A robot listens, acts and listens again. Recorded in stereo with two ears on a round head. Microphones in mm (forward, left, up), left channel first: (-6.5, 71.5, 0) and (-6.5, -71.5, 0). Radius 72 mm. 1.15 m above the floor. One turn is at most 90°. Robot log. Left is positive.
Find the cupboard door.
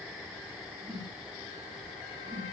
cmd idle
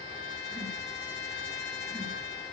cmd idle
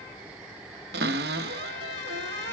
note: The cupboard door: about 75° right or 105° right.
cmd yaw -75
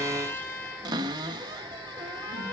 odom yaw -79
note: So it is at 25° right.
cmd yaw -25
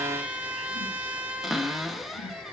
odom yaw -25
end: Facing the cupboard door.